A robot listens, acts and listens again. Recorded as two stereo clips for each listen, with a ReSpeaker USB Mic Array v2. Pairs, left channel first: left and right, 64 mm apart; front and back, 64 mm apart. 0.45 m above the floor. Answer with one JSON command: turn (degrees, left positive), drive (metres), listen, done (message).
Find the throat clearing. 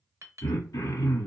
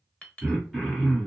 {"turn": 90}
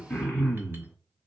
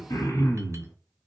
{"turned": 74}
{"turn": 15}
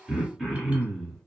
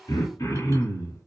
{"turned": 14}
{"done": "Found it: throat clearing, straight ahead, 1 to 2 m away."}